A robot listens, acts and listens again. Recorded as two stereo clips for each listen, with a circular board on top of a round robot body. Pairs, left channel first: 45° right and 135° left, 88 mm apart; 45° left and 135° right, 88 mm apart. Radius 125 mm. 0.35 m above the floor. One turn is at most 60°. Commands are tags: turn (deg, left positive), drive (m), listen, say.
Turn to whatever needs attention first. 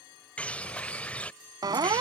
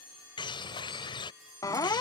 <turn deg="60"/>
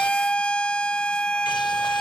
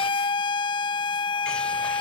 <turn deg="30"/>
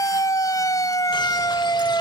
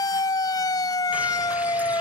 <say>Facing the siren.</say>